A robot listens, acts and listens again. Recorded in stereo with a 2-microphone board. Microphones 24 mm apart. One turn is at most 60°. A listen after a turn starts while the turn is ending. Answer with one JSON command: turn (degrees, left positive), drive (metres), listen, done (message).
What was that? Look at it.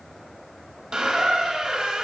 {"turn": -35}
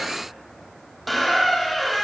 {"done": "Facing the squeak, under 1 m away."}